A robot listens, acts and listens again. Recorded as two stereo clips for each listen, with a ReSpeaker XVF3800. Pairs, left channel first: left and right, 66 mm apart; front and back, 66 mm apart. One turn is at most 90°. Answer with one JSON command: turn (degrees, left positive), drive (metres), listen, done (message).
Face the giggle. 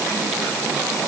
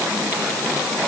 {"listen": true}
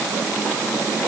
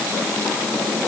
{"listen": true}
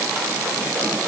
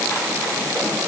{"done": "I can't make out a giggle to turn to."}